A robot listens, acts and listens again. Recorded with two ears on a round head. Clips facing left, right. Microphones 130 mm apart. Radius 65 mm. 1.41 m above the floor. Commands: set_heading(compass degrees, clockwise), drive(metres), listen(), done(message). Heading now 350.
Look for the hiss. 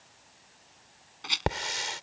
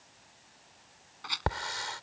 set_heading(325)
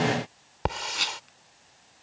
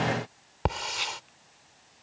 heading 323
done("Facing the hiss.")